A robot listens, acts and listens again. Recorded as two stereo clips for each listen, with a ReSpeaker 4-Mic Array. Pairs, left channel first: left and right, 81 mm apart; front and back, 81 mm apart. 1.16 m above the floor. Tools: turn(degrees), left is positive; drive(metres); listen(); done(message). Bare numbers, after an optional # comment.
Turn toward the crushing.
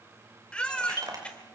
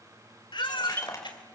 # The crushing: 50° right.
turn(-50)
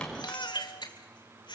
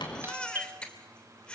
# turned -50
listen()
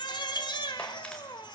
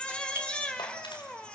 listen()
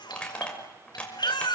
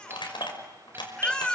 # The crushing is now 15° left.
turn(15)
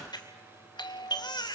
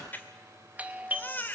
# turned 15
listen()
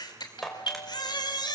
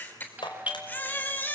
done("Facing the crushing.")